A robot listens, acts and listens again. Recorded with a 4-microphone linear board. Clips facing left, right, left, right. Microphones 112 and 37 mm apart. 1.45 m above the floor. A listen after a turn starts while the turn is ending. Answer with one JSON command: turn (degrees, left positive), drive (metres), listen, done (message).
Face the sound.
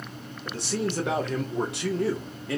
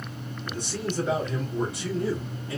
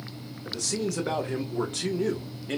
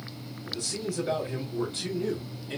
{"turn": 70}
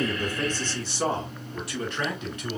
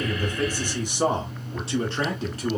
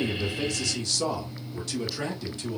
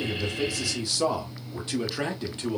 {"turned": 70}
{"turn": -40}
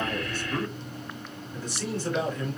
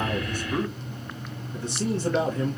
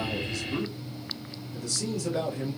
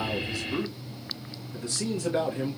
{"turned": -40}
{"turn": -30}
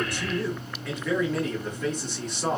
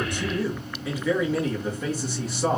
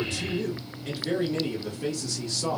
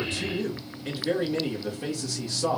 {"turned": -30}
{"done": "Facing the man speaking, 1 to 2 m away."}